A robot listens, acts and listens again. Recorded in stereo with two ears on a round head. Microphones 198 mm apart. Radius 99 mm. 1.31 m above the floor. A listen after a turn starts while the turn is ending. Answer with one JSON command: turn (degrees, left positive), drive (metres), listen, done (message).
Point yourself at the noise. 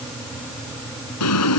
{"turn": 90}
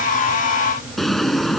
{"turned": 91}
{"done": "Facing the drawer."}